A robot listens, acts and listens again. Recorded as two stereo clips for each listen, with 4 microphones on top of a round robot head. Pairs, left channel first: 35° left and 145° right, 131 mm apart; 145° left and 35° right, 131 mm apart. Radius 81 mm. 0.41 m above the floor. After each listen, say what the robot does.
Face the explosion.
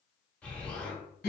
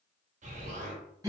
Turn 45° right.
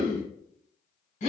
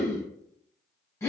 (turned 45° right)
I heard an explosion from this way, but can't make it out now.